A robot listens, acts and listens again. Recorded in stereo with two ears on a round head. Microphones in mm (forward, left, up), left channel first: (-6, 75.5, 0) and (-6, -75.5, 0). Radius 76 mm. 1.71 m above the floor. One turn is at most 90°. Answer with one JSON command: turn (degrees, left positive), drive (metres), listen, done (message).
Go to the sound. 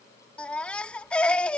{"turn": 30}
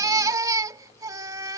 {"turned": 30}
{"turn": -20}
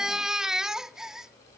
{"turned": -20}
{"drive": 1.0}
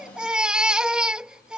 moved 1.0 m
{"drive": 1.0}
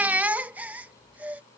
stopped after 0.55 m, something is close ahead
{"turn": -10}
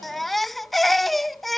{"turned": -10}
{"done": "I am next to the baby crying."}